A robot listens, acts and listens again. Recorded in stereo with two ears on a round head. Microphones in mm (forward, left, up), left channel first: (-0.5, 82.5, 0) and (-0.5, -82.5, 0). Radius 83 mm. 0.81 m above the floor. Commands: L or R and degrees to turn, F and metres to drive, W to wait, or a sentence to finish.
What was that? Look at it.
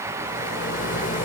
L45
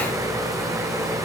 Facing the rattle.